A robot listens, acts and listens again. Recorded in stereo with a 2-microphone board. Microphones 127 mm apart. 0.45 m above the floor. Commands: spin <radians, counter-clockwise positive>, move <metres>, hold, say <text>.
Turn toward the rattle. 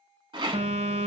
spin -0.70
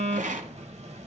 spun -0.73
spin -1.66
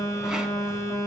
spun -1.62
hold
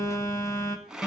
say Facing the rattle.